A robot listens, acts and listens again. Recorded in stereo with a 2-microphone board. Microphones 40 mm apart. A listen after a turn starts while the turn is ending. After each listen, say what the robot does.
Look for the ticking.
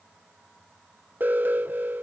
Keep listening.
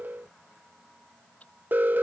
Turn 35° left.
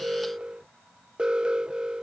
Keep listening.
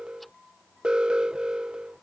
Keep listening.
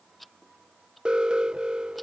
Found it: ticking, straight ahead.